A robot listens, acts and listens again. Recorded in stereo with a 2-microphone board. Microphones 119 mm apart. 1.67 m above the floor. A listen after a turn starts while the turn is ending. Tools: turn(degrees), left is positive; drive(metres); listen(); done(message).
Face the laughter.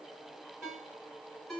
listen()
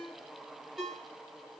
listen()
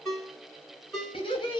turn(degrees=40)
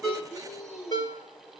turn(degrees=120)
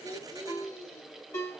turn(degrees=20)
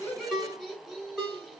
done("Found it: laughter, straight ahead.")